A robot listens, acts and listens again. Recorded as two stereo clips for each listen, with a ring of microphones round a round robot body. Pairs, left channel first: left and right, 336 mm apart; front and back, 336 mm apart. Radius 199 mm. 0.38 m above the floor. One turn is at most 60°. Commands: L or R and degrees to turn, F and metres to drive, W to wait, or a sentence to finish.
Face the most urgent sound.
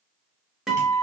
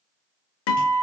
W
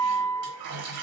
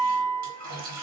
W
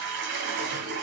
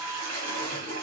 I can't make out anything urgent to turn to.